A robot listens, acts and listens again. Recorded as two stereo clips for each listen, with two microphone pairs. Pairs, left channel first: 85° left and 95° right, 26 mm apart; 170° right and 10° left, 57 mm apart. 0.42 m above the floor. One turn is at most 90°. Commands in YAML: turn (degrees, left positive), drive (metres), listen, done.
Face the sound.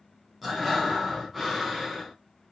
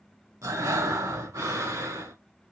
done: "Facing the breathing, 2 to 4 m away."